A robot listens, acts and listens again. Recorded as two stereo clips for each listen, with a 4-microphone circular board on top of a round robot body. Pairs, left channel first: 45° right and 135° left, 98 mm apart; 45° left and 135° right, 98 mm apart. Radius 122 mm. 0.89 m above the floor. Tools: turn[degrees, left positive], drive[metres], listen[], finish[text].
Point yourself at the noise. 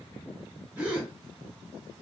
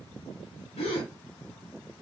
Thought: The gasp: 60° left.
Action: turn[60]
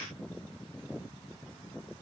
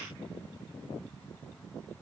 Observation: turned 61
Action: finish[Facing where the gasp came from. I can't hear it now.]